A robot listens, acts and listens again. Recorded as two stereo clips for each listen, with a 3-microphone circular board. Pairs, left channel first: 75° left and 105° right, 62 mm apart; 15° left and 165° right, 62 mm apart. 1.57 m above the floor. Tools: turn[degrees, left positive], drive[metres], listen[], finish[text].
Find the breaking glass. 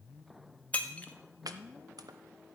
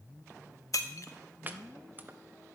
Thought: The breaking glass: 15° left.
Action: turn[15]
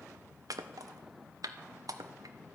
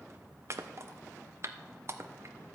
Action: finish[I heard breaking glass from this way, but can't make it out now.]